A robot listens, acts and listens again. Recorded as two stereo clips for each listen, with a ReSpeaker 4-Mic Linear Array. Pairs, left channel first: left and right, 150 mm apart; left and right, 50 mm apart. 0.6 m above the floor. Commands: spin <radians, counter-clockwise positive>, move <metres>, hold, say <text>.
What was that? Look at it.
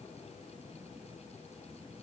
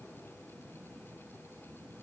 hold
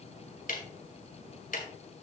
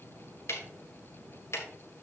spin 1.13
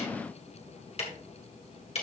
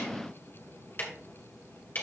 spin 0.79
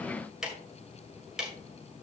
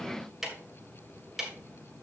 say Facing the ticking.